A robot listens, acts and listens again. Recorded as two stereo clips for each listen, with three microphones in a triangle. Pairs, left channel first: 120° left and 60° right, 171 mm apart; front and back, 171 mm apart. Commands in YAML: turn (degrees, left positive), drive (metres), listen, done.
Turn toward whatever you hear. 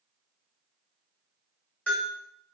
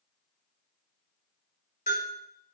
turn: 40
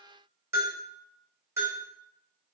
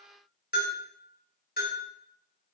turn: 10
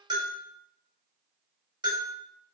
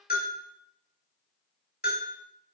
done: "Found it: a bell, straight ahead."